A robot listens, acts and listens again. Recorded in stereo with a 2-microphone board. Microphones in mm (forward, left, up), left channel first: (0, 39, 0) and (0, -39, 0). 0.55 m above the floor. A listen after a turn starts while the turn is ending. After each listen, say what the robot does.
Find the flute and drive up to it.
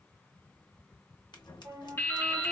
Turn 55° right.
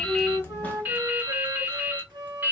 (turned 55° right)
Turn 65° right.
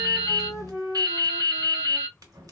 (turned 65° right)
Drive 1.0 m forward.
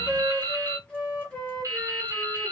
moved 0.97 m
Turn 10° left.
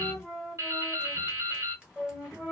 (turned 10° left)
Drive 1.0 m forward.
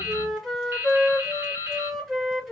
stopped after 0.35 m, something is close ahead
Arrived at the flute, straight ahead.